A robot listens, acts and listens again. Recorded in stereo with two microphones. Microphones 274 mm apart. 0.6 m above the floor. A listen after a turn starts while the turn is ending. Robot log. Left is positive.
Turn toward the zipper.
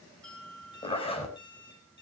note: The zipper: about 20° left or 160° left.
cmd yaw +20
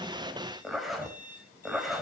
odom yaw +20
end: Found it: a zipper, straight ahead, over 4 m away.